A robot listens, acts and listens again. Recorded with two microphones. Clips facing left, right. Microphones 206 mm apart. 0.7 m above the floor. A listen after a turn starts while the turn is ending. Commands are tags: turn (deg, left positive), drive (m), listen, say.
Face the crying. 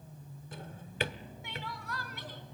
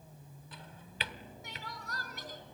<turn deg="-45"/>
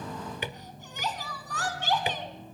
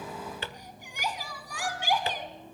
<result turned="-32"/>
<turn deg="-10"/>
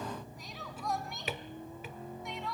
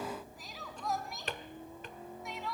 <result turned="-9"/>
<say>Facing the crying.</say>